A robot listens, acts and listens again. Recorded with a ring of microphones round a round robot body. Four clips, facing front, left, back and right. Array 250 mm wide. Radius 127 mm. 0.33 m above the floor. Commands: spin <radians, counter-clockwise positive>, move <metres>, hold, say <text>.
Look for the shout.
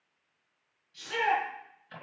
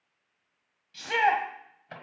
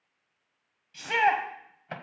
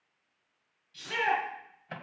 spin 2.53
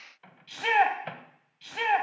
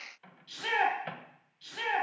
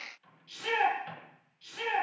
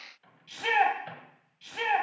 spin -0.35
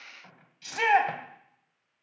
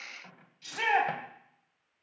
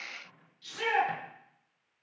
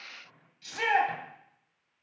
say Found it: a shout, straight ahead.